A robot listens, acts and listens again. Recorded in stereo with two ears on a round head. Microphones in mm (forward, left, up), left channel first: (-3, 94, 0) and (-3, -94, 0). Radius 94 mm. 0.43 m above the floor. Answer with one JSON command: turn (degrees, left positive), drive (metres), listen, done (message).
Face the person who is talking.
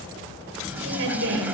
{"turn": -60}
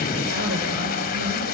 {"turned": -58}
{"listen": true}
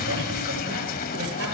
{"listen": true}
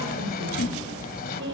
{"turn": -60}
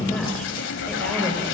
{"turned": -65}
{"done": "Found it: a woman speaking, straight ahead."}